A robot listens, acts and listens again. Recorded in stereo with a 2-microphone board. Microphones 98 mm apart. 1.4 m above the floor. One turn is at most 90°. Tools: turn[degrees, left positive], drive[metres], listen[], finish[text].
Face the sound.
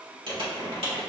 Thought: The crumpling: about 70° right or 110° right.
Action: turn[-70]
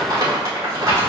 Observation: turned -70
Thought: So it is at 40° right.
Action: turn[-40]
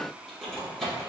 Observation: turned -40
Action: finish[Found it: crumpling, straight ahead.]